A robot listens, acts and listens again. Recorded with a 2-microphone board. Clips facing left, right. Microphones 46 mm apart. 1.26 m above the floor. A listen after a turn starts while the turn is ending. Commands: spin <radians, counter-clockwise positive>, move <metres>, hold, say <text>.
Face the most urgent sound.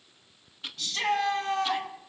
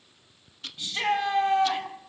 spin -0.35
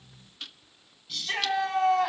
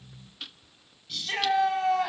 say Facing the shout.